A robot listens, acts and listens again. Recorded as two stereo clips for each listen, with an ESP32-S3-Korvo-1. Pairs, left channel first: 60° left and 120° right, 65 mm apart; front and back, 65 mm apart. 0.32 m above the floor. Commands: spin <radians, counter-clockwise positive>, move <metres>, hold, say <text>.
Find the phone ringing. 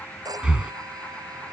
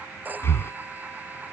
spin -2.01
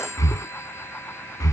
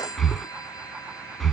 spin 0.26
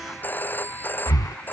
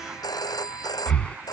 say Facing the phone ringing.